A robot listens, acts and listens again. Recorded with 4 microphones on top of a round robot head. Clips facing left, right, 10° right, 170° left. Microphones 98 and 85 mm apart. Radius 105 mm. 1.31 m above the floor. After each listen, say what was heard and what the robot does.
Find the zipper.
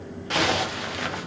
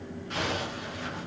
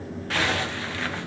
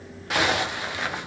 The zipper: 95° left. Turn 95° left.
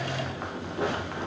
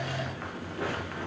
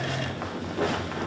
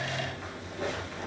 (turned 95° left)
The zipper is now 20° left. Turn 20° left.
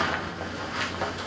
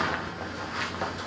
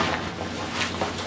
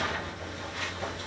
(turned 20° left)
Found it: a zipper, straight ahead.